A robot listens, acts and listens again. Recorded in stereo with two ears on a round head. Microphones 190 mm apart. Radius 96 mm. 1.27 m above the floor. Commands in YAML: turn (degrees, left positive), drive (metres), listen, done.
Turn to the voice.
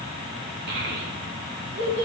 turn: -50
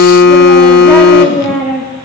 done: "Facing the child speaking, 2 to 4 m away."